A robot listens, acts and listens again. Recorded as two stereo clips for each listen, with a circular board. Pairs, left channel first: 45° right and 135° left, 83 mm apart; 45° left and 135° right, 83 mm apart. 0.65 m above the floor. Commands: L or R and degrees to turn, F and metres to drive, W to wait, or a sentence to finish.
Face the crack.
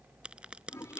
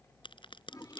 L55
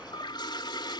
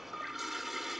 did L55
I heard a crack from this way, but can't make it out now.